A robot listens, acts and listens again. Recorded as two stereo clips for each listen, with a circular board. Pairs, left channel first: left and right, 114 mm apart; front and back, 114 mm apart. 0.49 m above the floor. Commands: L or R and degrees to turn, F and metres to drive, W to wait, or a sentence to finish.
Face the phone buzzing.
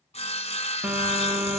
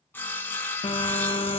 R15
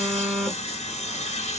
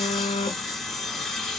Facing the phone buzzing, under 1 m away.